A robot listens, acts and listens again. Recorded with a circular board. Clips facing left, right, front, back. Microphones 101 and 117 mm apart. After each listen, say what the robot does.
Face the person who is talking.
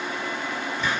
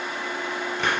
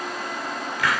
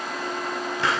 Keep listening.
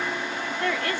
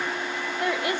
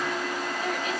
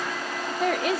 Turn 165° right.
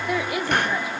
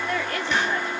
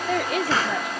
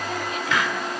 Turn 10° left.
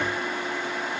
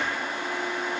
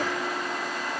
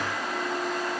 Keep listening.
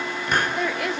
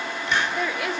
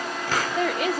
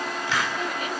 Found it: a woman speaking, straight ahead.